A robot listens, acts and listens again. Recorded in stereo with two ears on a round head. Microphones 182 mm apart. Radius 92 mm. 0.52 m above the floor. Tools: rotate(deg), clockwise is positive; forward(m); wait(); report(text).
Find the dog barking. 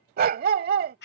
rotate(45)
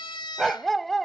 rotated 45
report("Facing the dog barking.")